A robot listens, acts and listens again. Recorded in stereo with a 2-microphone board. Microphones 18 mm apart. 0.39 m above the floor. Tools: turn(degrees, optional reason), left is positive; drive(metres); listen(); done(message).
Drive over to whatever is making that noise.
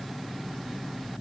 listen()
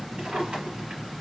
turn(degrees=-90)
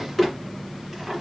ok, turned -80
turn(degrees=-10, reason="So it is at 10° right.")
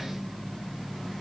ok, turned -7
listen()
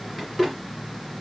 drive(metres=1.0)
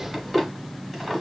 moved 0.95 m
turn(degrees=-10, reason="The drawer is now 10° right.")
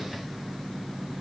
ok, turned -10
listen()
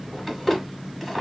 drive(metres=1.0)
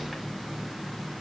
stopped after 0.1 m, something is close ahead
listen()
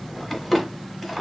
done("Arrived at the drawer, straight ahead.")